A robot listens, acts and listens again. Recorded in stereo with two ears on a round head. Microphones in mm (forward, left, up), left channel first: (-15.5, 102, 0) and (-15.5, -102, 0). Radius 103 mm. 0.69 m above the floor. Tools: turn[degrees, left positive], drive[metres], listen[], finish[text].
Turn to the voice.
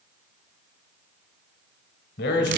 Thought: The man speaking: about 50° left or 130° left.
Action: turn[50]
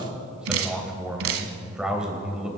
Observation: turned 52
Action: finish[Found it: a man speaking, straight ahead.]